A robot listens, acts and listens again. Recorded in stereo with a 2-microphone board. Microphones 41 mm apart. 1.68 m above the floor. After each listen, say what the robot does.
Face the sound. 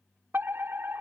Turn 65° right.
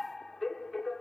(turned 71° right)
Found it: a fire alarm, straight ahead.